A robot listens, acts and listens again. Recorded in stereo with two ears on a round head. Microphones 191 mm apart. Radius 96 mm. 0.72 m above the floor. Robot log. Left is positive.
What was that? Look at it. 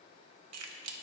cmd yaw -90
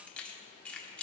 end: Facing the keys jangling.